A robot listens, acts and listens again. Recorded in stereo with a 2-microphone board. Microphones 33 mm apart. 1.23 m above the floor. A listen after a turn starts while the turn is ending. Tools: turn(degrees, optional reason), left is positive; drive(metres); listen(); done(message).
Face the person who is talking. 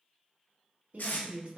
turn(degrees=-60, reason="The woman speaking: about 60° right or 120° right.")
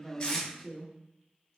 done("Found it: a woman speaking, straight ahead, 1 to 2 m away.")